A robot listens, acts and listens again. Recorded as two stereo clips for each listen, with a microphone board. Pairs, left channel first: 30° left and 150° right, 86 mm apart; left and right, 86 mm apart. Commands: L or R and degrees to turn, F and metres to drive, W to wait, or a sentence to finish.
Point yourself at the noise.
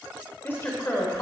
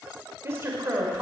R30
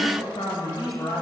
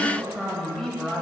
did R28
Facing the woman speaking, 2 to 4 m away.